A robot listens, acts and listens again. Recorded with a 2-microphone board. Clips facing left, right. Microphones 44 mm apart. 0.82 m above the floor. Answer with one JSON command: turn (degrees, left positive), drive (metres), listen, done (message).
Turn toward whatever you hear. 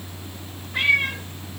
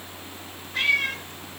{"turn": 15}
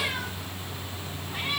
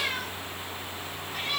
{"listen": true}
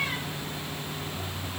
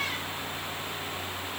{"listen": true}
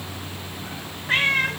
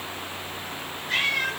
{"turn": 40}
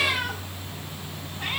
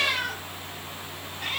{"listen": true}
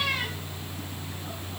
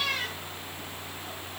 {"listen": true}
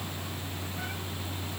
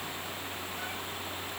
{"done": "I heard a cat meowing, but can't make it out now. It was about straight ahead or 100° left."}